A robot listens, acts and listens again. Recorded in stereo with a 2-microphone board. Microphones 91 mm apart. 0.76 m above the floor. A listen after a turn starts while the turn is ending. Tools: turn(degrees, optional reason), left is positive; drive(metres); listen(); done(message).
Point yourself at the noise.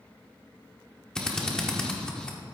turn(degrees=30)
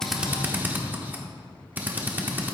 turn(degrees=-20, reason="So it is at 20° right.")
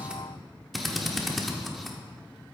done("Facing the drill.")